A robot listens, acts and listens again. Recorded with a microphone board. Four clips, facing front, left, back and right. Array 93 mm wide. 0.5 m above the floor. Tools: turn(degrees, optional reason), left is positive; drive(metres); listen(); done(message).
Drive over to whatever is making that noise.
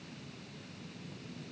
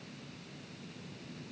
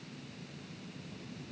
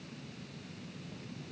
listen()
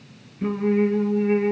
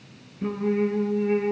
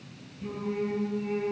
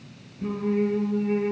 turn(degrees=25, reason="The singing: 25° left.")
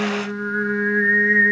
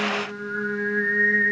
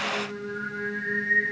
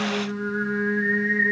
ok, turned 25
drive(metres=1.0)
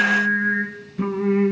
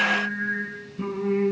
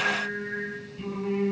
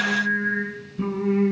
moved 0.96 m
drive(metres=1.0)
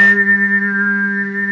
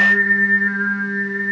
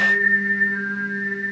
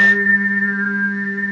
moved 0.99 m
drive(metres=1.0)
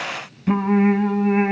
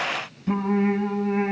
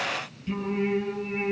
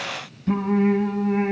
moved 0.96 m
drive(metres=1.0)
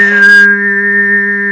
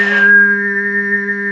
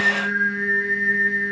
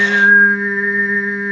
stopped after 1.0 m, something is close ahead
done("I am next to the singing.")